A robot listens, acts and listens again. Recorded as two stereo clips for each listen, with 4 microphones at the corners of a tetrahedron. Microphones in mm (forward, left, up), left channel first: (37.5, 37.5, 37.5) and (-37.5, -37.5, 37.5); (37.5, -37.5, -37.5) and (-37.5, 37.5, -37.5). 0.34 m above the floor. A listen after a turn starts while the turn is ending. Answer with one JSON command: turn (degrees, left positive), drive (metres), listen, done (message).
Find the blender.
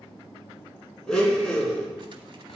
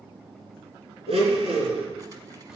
{"turn": 130}
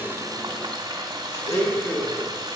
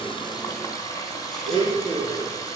{"turn": -20}
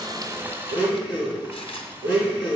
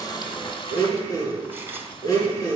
{"turn": 10}
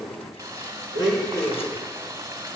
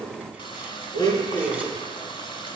{"done": "Found it: a blender, straight ahead."}